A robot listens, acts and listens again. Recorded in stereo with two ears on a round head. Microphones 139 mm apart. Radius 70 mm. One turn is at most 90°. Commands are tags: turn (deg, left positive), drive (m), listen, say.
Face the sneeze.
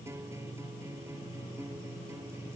<listen/>
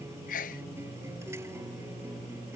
<turn deg="55"/>
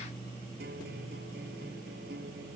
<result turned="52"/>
<listen/>
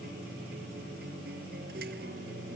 <say>I heard a sneeze, but can't make it out now. It was about 5° left or 70° left.</say>